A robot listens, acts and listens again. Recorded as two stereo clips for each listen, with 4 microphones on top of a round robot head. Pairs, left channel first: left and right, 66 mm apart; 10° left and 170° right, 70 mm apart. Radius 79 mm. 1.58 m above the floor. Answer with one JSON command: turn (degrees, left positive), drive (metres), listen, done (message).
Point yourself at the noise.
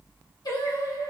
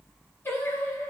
{"turn": 65}
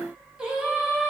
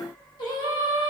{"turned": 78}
{"turn": -10}
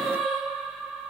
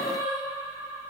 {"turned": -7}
{"done": "Facing the singing, 1 to 2 m away."}